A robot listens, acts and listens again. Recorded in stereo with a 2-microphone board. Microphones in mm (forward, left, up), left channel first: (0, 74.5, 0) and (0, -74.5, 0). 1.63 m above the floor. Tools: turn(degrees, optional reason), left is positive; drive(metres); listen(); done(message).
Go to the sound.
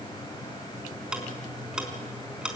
turn(degrees=-30)
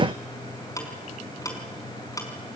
turn(degrees=25, reason="So it is at 25° left.")
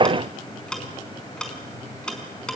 drive(metres=1.0)
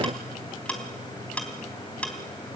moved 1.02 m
turn(degrees=10, reason="The ticking is now 10° left.")
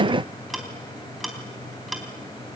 drive(metres=1.0)
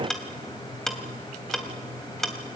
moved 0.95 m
drive(metres=1.0)
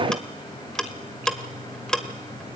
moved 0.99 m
turn(degrees=10, reason="The ticking is now 10° left.")
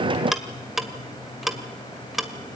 drive(metres=1.0)
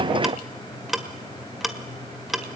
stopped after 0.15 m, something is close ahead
done("Arrived at the ticking, straight ahead.")